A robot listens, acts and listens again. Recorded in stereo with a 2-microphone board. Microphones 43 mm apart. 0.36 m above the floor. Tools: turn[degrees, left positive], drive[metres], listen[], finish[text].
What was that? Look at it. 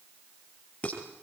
Thought: The dishes clattering: about 30° left or 150° left.
Action: turn[30]
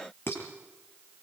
Thought: So it is at 115° left.
Action: turn[115]
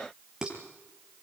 Thought: The dishes clattering is now 15° right.
Action: turn[-15]
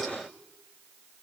Action: listen[]
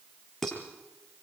Action: finish[Facing the dishes clattering, over 4 m away.]